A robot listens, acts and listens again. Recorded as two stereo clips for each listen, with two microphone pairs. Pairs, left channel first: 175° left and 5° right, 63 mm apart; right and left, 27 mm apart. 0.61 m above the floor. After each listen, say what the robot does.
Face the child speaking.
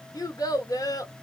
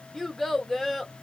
Turn 170° right.
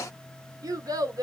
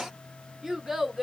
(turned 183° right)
Turn 15° left.
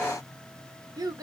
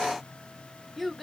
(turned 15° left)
Facing the child speaking.